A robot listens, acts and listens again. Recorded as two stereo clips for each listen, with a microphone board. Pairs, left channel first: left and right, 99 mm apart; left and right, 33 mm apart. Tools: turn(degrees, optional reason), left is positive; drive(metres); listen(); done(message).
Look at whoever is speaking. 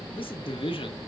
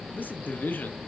turn(degrees=65, reason="The man speaking: about 65° left or 115° left.")
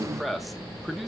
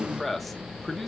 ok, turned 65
done("Found it: a man speaking, straight ahead, 1 to 2 m away.")